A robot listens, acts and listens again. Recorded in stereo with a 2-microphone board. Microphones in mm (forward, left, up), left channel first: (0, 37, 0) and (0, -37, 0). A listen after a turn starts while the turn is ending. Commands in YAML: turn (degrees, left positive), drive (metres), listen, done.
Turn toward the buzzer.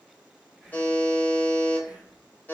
turn: 25
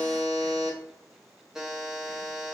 done: "Facing the buzzer, under 1 m away."